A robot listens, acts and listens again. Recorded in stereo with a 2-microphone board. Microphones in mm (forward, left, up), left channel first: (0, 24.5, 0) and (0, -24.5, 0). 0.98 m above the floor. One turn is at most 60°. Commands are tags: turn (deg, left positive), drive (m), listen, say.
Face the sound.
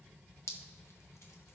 <turn deg="60"/>
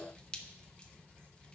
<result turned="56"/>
<turn deg="25"/>
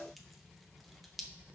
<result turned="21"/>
<say>Found it: dripping, straight ahead, under 1 m away.</say>